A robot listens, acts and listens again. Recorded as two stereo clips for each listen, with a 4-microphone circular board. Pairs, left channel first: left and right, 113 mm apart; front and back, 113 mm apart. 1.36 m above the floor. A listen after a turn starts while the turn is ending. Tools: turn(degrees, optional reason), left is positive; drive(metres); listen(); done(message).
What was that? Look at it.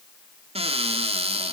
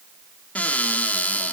turn(degrees=-75, reason="The cupboard door: 75° right.")
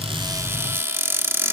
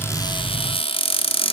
turn(degrees=-25, reason="The cupboard door is now 25° right.")
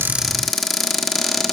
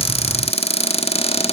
done("Found it: a cupboard door, straight ahead, 1 to 2 m away.")